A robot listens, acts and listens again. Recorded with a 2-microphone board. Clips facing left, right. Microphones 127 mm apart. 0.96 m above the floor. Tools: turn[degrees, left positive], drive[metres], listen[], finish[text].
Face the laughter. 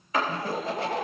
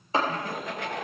Thought: The laughter: about 35° left or 145° left.
Action: turn[35]
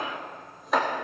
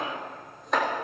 Action: listen[]
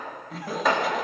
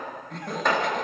Action: finish[Facing the laughter, 1 to 2 m away.]